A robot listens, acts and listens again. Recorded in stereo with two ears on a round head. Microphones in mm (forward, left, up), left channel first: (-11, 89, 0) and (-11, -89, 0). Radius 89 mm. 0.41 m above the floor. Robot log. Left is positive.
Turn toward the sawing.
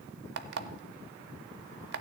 cmd idle
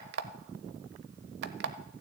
cmd idle
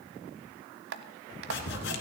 note: The sawing: about 60° left or 120° left.
cmd yaw +60
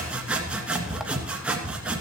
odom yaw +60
end: Found it: sawing, straight ahead, 1 to 2 m away.